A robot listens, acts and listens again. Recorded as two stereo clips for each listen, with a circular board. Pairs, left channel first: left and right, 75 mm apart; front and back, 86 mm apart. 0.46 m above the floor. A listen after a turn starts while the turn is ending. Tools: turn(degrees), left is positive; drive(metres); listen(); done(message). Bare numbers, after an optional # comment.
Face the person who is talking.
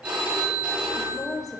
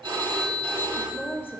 # The woman speaking: 60° left.
turn(60)
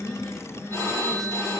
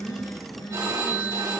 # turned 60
listen()
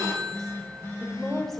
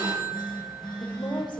done("Found it: a woman speaking, straight ahead, 1 to 2 m away.")